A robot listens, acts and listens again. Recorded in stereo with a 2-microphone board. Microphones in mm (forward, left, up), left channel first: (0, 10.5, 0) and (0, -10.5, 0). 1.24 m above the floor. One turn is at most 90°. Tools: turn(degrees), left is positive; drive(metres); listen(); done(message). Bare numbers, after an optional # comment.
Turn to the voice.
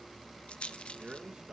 # The man speaking: about 50° right or 130° right.
turn(-50)
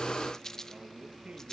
listen()
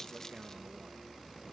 listen()
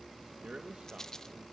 # So it is at 80° right.
turn(-80)
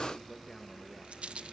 # The man speaking is now 20° left.
turn(20)
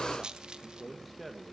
done("Found it: a man speaking, straight ahead.")